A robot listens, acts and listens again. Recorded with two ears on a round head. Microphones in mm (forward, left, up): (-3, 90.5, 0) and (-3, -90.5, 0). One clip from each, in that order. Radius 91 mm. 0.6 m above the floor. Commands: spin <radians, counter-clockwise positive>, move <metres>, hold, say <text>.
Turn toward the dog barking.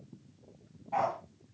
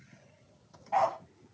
spin -0.61
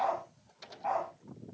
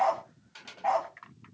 spin -1.92
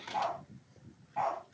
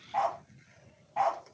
spin -0.52
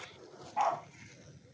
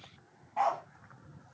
spin -0.17
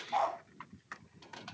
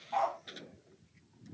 say Found it: a dog barking, straight ahead.